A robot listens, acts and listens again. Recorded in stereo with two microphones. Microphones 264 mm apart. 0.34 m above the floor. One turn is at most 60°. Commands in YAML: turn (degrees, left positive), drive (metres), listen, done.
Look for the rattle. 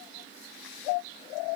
listen: true
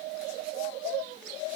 listen: true
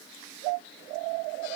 done: "I can't make out a rattle to turn to."